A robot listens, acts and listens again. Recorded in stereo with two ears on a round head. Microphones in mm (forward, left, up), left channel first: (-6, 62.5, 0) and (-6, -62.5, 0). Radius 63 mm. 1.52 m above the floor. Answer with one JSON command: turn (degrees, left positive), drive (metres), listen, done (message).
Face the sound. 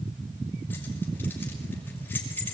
{"turn": 30}
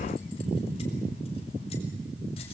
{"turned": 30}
{"listen": true}
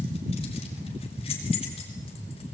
{"turn": 135}
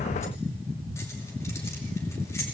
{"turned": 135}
{"listen": true}
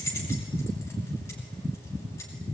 {"turn": 20}
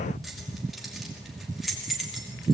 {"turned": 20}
{"done": "Found it: keys jangling, straight ahead, over 4 m away."}